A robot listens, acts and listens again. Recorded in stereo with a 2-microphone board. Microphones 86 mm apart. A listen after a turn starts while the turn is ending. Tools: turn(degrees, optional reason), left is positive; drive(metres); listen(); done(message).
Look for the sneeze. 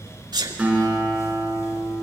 turn(degrees=-55, reason="The sneeze: about 55° right or 125° right.")
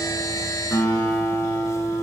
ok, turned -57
listen()
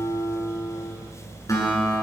done("I heard a sneeze, but can't make it out now. It was about straight ahead or 65° right.")